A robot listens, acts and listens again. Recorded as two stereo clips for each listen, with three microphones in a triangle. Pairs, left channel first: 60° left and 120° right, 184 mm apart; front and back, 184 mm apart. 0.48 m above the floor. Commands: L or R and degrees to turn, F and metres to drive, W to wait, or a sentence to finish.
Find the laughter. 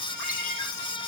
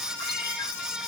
W
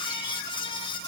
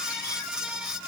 W
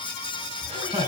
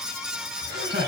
L175
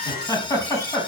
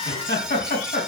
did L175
R15
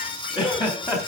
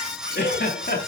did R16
Found it: laughter, straight ahead, over 4 m away.